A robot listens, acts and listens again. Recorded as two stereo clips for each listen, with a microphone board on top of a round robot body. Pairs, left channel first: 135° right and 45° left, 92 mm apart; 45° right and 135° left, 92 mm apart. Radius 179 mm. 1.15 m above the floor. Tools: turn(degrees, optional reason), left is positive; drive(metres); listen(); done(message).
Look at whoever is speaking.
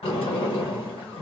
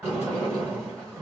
listen()
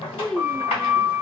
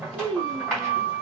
turn(degrees=135, reason="The child speaking: 135° left.")
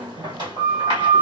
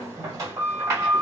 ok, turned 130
listen()
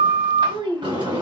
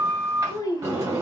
done("Found it: a child speaking, straight ahead, under 1 m away.")